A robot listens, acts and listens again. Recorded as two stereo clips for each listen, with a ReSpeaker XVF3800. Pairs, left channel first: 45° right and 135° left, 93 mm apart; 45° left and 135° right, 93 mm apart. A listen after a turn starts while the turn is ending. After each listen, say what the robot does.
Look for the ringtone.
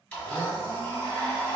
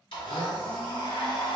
Keep listening.
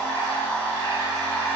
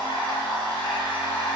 Keep listening.
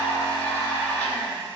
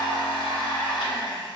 I can't make out a ringtone, only a blender.